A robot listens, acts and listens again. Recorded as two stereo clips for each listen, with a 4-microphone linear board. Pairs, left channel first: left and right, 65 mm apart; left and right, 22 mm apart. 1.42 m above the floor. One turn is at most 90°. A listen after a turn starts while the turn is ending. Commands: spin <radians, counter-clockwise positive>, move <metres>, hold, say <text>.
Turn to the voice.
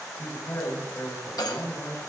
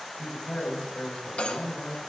spin 0.87
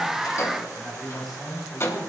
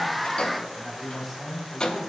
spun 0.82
say Found it: a man speaking, straight ahead, over 4 m away.